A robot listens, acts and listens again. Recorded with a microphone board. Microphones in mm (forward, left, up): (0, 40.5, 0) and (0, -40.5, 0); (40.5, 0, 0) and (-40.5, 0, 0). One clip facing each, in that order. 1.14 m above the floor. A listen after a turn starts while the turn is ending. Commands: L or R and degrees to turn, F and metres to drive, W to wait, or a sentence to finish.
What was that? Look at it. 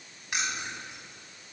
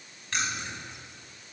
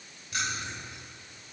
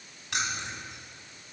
L165
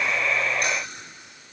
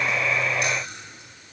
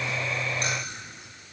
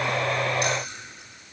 L50
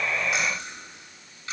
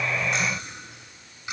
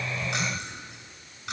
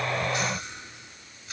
R15
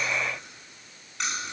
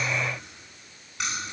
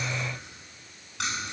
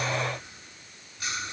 Facing the keys jangling, over 4 m away.